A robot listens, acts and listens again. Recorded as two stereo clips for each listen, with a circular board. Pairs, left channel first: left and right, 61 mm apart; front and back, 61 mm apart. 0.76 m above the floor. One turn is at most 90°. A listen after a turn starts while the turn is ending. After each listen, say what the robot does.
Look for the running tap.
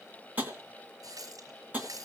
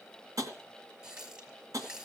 Turn 90° right.
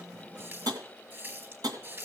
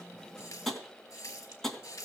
Turn 35° right.
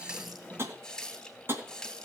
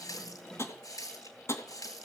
Turn 10° left.
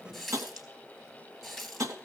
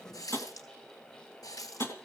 Facing the running tap, 2 to 4 m away.